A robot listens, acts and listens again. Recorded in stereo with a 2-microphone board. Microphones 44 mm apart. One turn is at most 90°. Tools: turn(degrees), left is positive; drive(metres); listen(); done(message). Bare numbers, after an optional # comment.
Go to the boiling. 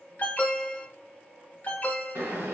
# The boiling: about 75° right or 105° right.
turn(-75)
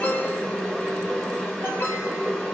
drive(1.0)
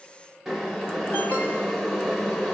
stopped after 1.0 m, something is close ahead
done("I am next to the boiling.")